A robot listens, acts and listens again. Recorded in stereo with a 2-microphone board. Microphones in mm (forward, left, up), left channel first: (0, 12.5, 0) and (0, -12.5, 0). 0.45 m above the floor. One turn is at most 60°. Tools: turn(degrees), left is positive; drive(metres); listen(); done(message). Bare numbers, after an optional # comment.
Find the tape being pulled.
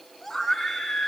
listen()
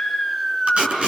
# The tape being pulled: about 55° right or 125° right.
turn(-55)
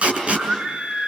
# So it is at 65° right.
turn(-60)
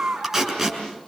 # The tape being pulled is now 15° right.
turn(-15)
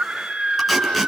listen()
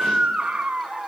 listen()
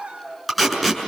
done("Found it: tape being pulled, straight ahead.")